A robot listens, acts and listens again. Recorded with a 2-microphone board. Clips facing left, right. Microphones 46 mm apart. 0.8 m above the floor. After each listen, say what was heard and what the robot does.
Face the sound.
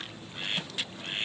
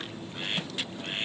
Keep listening.
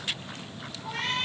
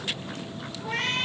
The cat meowing: about 60° right or 120° right. Turn 60° right.
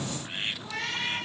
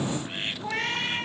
So it is at 50° right. Turn 50° right.
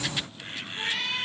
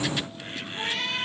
Facing the cat meowing.